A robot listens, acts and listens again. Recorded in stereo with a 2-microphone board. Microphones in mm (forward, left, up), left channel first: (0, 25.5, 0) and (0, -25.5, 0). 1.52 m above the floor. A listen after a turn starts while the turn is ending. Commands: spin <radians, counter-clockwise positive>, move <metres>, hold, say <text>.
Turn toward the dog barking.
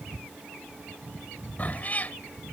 hold
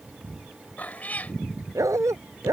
spin -1.57
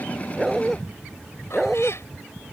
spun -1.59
say Found it: a dog barking, straight ahead.